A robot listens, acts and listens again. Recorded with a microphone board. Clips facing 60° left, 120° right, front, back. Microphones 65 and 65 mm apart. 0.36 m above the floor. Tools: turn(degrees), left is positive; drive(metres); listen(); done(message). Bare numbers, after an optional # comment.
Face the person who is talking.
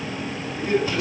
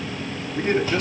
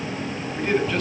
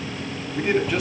# The man speaking: 100° right.
turn(-100)
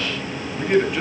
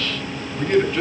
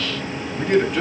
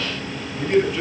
# The man speaking is now 20° right.
turn(-20)
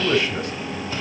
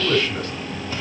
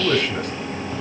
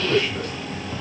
done("Found it: a man speaking, straight ahead.")